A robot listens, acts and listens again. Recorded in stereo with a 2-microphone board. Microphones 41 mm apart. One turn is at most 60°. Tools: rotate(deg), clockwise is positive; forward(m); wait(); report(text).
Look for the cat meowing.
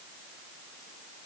wait()
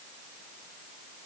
wait()
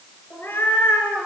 rotate(-60)
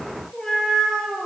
rotate(-15)
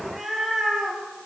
report("Facing the cat meowing.")